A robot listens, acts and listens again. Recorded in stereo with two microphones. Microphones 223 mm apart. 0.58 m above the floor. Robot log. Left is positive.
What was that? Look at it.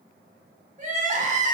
note: The crying: about 35° right or 145° right.
cmd yaw -35
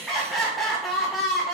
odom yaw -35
end: Found it: crying, straight ahead, under 1 m away.